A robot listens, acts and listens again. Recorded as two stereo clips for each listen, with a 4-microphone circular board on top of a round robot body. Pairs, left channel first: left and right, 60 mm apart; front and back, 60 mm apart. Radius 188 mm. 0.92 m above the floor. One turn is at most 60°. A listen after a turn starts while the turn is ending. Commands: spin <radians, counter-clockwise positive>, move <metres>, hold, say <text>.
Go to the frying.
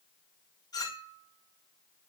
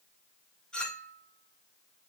hold
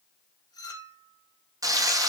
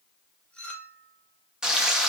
spin -1.05
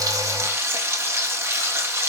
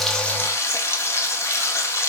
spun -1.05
spin -0.70
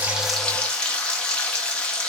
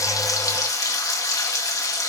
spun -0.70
spin 0.26
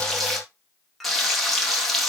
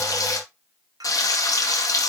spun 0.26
move 1.0
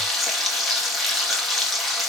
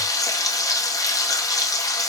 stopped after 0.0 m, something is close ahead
say Something is in my way. I am facing the frying but have not reached it.